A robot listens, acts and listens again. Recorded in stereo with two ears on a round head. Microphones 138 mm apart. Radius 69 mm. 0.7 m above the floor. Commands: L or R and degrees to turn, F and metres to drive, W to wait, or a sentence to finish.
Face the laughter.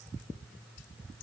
W
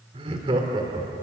R25
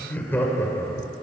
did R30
L20
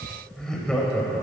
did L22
L10
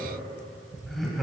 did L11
Found it: laughter, straight ahead, 2 to 4 m away.